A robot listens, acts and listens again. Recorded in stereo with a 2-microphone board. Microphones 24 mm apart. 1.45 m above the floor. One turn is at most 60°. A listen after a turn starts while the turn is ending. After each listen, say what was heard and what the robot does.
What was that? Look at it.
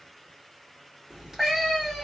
The cat meowing: about 20° right or 160° right. Turn 20° right.
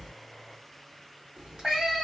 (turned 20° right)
So it is at 140° right. Turn 60° right.
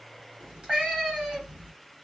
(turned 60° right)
The cat meowing is now 80° right. Turn 60° right.
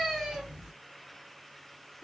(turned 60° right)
Nothing new. It was at 20° right. Turn 20° right.
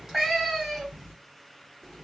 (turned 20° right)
Found it: a cat meowing, straight ahead.